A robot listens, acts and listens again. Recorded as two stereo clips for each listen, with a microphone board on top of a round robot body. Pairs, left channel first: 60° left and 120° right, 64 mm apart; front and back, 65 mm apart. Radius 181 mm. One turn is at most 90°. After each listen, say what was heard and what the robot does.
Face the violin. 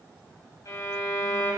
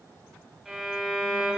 The violin: 95° left. Turn 90° left.
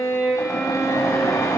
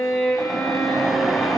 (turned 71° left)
The violin is now 25° left. Turn 25° left.
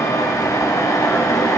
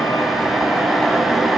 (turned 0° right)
Nothing new. It was at 25° left. Turn 25° left.
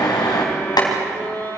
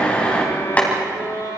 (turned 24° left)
Found it: a violin, straight ahead.